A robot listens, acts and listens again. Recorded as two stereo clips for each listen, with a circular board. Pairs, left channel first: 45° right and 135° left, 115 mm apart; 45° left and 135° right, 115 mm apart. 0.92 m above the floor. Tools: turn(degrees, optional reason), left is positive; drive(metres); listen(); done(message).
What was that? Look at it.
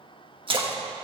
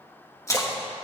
turn(degrees=105, reason="The splash: 105° left.")
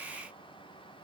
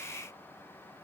done("I heard a splash from this way, but can't make it out now.")